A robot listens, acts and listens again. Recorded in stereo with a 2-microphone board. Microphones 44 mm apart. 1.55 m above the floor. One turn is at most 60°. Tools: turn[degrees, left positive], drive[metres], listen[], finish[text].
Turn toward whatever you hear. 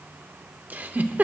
Thought: The giggle: about 40° right or 140° right.
Action: turn[-40]
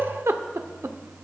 Thought: So it is at 100° right.
Action: turn[-60]
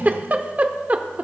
Thought: The giggle is now 40° right.
Action: turn[-40]
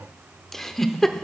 Action: finish[Found it: a giggle, straight ahead, under 1 m away.]